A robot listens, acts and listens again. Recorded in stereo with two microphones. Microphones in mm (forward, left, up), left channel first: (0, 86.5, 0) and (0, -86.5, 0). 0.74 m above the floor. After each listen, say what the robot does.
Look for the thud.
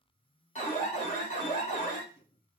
Keep listening.
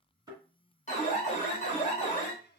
Turn 20° right.
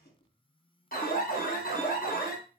Keep listening.
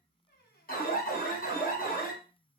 I heard a thud, but can't make it out now. It was about straight ahead or 140° right.